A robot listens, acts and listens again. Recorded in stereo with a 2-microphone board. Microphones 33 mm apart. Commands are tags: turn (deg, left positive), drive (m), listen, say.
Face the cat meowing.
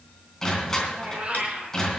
<turn deg="-40"/>
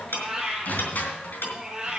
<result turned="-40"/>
<turn deg="-20"/>
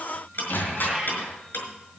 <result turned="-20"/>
<turn deg="-15"/>
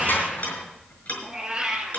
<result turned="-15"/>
<turn deg="-20"/>
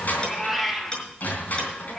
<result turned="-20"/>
<turn deg="10"/>
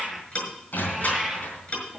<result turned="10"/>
<say>Facing the cat meowing, 2 to 4 m away.</say>